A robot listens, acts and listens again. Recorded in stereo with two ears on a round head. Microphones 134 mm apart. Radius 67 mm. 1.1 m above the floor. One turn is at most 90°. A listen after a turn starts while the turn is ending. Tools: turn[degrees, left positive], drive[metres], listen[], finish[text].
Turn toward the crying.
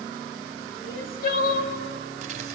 Thought: The crying: about 60° left or 120° left.
Action: turn[60]
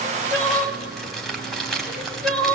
Action: finish[Facing the crying, 1 to 2 m away.]